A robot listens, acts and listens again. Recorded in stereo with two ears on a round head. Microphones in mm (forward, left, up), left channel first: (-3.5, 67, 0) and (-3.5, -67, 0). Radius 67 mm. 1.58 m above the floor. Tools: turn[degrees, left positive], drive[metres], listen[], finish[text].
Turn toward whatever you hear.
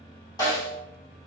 Thought: The snare drum: about 25° left or 155° left.
Action: turn[25]
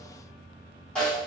Action: finish[Facing the snare drum.]